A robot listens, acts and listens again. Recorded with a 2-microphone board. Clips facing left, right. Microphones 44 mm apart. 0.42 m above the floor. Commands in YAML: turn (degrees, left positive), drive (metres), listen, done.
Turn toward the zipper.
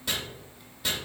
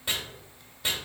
listen: true
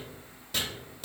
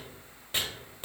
listen: true
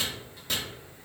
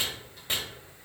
done: "I can't make out a zipper, only chopping."